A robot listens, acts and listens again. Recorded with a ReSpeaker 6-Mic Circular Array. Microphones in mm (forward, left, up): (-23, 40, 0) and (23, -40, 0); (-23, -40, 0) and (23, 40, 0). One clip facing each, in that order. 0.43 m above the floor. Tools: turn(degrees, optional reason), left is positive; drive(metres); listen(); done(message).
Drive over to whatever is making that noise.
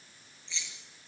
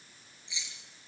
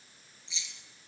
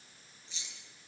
turn(degrees=15, reason="The keys jangling: 15° left.")
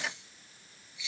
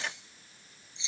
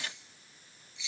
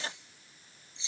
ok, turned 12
drive(metres=1.0)
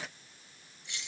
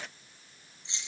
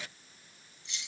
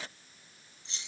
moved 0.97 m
drive(metres=1.0)
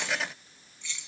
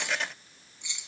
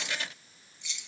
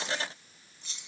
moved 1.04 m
turn(degrees=10, reason="The keys jangling is now 10° left.")
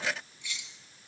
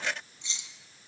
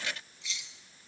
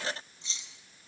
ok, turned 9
drive(metres=1.0)
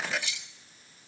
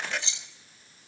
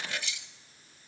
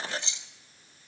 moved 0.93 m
drive(metres=1.0)
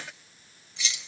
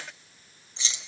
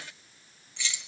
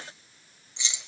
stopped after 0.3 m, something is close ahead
done("I am next to the keys jangling.")